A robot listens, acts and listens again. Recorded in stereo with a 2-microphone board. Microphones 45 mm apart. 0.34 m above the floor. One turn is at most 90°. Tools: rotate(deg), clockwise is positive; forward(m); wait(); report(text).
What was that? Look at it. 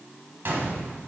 rotate(60)
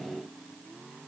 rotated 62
wait()
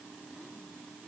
report("I heard a gunshot, but can't make it out now. It was about 5° left or 60° right.")